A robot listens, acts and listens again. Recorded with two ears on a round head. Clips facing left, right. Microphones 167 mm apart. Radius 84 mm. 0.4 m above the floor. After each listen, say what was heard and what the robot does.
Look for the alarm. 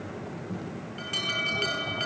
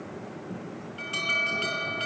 The alarm: about 15° left or 165° left. Turn 15° left.
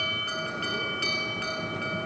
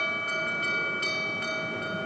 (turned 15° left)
So it is at 145° left. Turn 145° left.
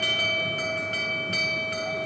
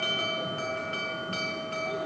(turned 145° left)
The alarm is now 15° left. Turn 15° left.
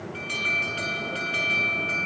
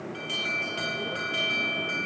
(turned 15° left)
Found it: an alarm, straight ahead.